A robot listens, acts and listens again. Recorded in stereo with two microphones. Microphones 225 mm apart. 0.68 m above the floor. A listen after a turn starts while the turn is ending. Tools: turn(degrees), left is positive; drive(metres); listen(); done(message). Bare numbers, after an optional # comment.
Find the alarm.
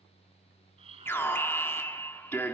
turn(30)
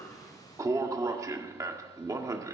# So it is at 15° right.
turn(-15)
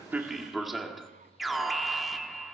done("Facing the alarm, 1 to 2 m away.")